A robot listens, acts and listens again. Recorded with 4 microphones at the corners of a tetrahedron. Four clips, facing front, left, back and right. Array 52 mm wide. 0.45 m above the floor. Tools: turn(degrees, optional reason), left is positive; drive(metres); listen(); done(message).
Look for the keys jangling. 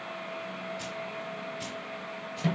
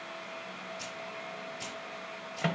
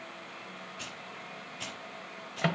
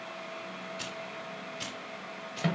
turn(degrees=-120, reason="The keys jangling: 120° right.")
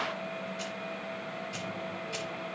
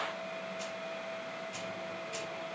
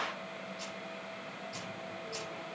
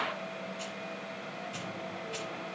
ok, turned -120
done("Found it: keys jangling, straight ahead.")